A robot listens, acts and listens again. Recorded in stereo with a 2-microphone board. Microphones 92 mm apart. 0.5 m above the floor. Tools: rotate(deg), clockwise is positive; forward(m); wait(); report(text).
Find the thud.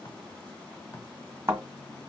rotate(30)
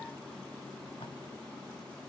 wait()
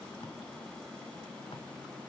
report("I heard a thud, but can't make it out now. It was about straight ahead or 120° right.")